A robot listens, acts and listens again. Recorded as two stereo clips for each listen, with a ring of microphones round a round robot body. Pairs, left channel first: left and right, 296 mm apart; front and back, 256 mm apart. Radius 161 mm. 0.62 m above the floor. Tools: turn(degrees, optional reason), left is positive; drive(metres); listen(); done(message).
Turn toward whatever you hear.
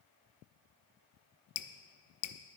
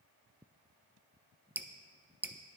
turn(degrees=95, reason="The dripping: 95° left.")
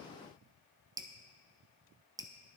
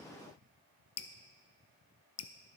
turn(degrees=-15, reason="The dripping is now 15° right.")
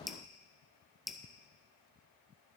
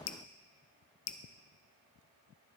done("Found it: dripping, straight ahead, under 1 m away.")